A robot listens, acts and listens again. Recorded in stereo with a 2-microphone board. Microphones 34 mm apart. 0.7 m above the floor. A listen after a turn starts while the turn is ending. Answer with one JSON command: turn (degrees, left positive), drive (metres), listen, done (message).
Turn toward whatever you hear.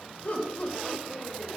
{"turn": 45}
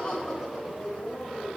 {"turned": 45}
{"done": "Found it: laughter, straight ahead, 2 to 4 m away."}